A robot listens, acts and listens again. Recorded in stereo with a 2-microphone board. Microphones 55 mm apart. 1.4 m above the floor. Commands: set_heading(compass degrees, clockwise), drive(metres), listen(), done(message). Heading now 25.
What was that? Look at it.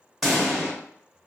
set_heading(55)
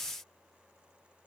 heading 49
listen()
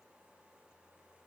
done("I heard a pop, but can't make it out now. It was about 15° left or 150° right.")